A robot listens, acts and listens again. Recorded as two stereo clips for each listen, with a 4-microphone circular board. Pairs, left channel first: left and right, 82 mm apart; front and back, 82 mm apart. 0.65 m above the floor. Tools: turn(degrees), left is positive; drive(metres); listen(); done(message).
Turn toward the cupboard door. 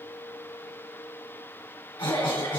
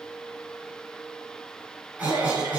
listen()
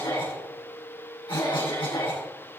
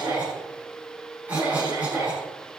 listen()
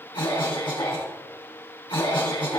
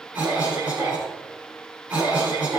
done("I can't make out a cupboard door to turn to.")